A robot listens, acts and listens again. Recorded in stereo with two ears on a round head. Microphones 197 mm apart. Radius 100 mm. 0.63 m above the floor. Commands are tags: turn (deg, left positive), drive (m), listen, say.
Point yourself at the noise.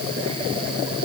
<listen/>
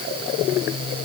<listen/>
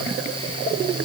<say>I can't make out anything.</say>